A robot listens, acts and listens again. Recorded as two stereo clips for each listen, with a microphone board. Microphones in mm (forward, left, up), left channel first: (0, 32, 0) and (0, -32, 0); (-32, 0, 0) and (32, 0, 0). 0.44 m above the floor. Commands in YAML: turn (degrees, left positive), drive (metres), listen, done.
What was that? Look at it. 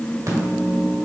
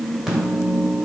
turn: -80
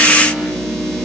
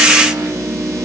done: "Found it: a microwave, straight ahead."